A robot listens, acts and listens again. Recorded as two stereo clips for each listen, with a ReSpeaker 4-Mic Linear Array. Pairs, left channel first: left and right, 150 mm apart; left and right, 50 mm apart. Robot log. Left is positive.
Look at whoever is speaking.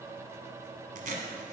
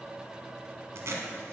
cmd idle
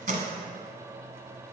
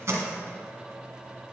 cmd idle
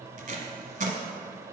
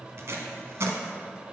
end: I can't make out anyone speaking to turn to.